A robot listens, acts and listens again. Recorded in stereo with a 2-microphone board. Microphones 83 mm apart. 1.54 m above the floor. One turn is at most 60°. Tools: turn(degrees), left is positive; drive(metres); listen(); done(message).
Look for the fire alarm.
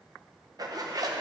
listen()
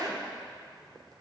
listen()
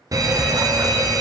turn(degrees=-45)
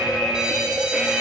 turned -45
turn(degrees=-10)
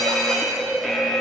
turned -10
done("Facing the fire alarm, under 1 m away.")